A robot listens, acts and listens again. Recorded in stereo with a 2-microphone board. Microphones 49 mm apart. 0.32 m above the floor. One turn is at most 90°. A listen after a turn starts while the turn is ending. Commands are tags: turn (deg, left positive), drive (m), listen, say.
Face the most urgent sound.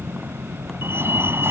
<turn deg="-60"/>
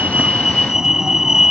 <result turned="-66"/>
<turn deg="-15"/>
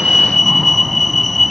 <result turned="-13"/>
<say>Found it: a fire alarm, straight ahead.</say>